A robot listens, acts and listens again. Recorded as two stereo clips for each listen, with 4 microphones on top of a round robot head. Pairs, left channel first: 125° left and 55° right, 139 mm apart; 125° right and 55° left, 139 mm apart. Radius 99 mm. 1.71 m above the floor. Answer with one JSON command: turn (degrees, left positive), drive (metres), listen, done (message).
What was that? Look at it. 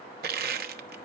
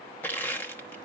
{"turn": -45}
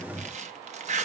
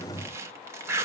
{"turn": -15}
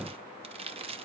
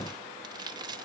{"done": "Facing the crushing."}